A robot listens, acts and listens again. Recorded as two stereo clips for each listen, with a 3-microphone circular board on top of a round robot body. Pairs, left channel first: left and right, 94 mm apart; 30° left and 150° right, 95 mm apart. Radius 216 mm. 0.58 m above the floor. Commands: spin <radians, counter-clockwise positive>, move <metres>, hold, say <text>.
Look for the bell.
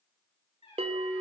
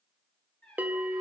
spin -1.31
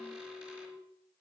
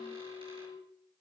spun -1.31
say Found it: a bell, straight ahead.